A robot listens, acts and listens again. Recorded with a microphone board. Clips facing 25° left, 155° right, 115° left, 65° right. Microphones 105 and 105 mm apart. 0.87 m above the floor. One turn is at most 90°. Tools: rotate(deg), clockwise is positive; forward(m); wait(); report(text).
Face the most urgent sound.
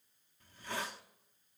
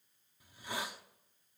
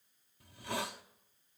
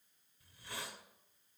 wait()
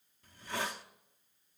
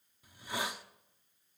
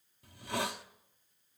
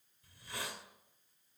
wait()
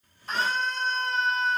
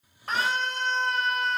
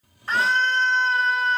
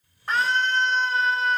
rotate(90)
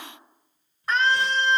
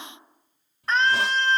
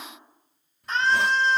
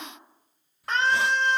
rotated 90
rotate(60)
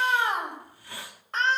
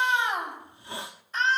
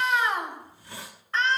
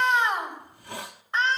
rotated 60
report("Facing the scream, over 4 m away.")